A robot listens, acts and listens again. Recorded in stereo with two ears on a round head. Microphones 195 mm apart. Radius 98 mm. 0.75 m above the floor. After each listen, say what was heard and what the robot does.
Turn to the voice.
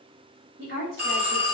The woman speaking: about 50° right or 130° right. Turn 50° right.
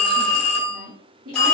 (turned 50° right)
So it is at 75° right. Turn 75° right.
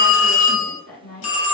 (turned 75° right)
The woman speaking is now 10° left. Turn 10° left.
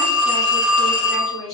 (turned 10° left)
Found it: a woman speaking, straight ahead.